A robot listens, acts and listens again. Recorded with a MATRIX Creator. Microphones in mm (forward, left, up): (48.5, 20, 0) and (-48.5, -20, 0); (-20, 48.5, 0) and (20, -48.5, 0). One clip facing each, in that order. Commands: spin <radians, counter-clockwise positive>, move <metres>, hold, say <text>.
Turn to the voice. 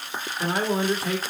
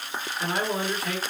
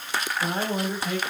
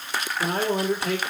spin -0.70
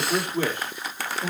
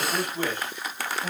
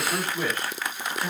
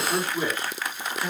spin 0.17
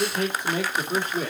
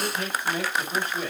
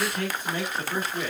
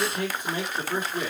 say Found it: a man speaking, straight ahead, 2 to 4 m away.